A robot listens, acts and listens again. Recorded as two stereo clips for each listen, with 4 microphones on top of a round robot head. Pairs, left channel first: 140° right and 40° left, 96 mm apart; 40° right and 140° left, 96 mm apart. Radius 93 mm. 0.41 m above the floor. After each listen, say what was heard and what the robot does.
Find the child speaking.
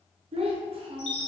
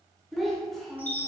The child speaking: 50° left. Turn 50° left.
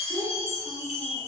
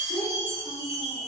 Found it: a child speaking, straight ahead, under 1 m away.